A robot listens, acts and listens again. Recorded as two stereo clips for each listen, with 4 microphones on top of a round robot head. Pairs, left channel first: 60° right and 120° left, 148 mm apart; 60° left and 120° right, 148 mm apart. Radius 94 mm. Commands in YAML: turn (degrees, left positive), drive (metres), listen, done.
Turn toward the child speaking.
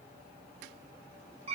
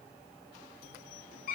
listen: true
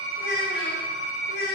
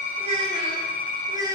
turn: -55
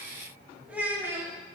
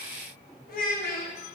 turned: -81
turn: 45
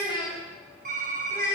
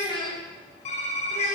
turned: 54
turn: 15
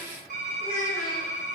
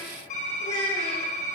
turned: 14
turn: 10
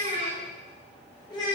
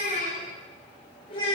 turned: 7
done: "Found it: a child speaking, straight ahead."